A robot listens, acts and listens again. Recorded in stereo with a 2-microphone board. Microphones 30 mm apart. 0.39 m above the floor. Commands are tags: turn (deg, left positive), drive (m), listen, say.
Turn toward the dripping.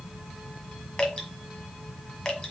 <turn deg="20"/>
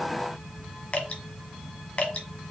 <turn deg="140"/>
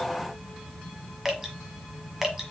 <turn deg="-10"/>
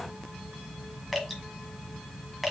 <say>Found it: dripping, straight ahead, 1 to 2 m away.</say>